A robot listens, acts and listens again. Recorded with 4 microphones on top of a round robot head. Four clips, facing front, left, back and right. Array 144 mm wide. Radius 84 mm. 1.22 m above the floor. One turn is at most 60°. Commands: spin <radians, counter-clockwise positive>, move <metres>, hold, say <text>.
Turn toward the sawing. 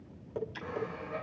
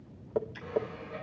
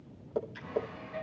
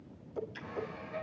spin 0.52
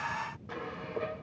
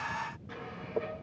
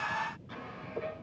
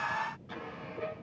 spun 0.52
say Found it: sawing, straight ahead, over 4 m away.